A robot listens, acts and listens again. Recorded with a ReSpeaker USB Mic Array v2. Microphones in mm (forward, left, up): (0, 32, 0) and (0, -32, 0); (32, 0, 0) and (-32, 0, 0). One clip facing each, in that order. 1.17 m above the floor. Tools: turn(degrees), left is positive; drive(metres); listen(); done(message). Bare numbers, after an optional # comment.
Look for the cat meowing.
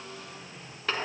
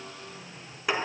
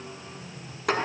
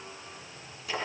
listen()
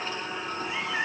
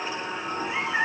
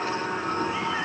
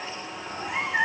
# The cat meowing: 160° right.
turn(-160)
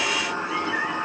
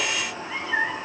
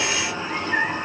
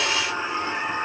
# The cat meowing is now 35° right.
turn(-35)
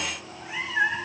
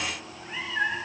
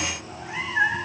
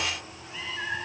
# The cat meowing is now 10° left.
turn(10)
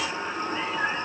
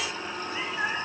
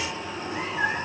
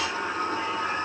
listen()
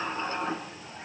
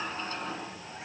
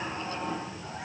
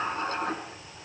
# The cat meowing is now 10° right.
turn(-10)
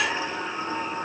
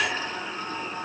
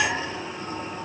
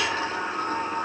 listen()
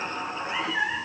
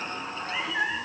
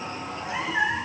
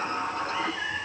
done("Facing the cat meowing.")